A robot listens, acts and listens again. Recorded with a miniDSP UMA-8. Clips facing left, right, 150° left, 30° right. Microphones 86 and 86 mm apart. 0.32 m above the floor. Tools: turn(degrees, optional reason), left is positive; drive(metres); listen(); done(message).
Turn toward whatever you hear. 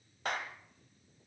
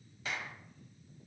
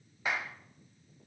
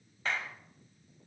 turn(degrees=75, reason="The clap: 75° left.")
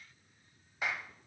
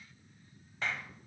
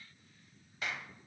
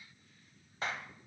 turn(degrees=15, reason="The clap is now 15° left.")
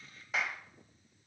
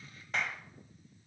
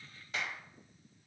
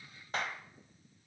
done("Found it: a clap, straight ahead.")